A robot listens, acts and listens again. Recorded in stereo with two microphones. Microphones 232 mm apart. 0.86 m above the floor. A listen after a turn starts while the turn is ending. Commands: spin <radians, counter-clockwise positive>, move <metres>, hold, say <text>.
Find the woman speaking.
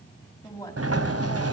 spin 0.52
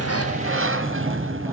hold
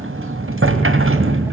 hold
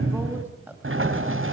say I heard a woman speaking, but can't make it out now. It was about 15° right or 135° left.